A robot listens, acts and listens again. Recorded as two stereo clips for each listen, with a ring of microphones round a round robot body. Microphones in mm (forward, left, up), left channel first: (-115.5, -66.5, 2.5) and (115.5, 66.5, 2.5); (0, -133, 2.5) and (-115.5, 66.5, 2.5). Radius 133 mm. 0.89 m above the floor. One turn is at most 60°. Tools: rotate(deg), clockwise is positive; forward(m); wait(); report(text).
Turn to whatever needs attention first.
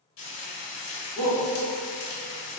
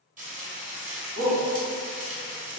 rotate(-60)
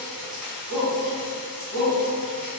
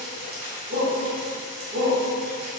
rotate(-60)
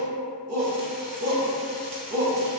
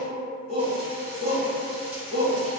report("Facing the shout.")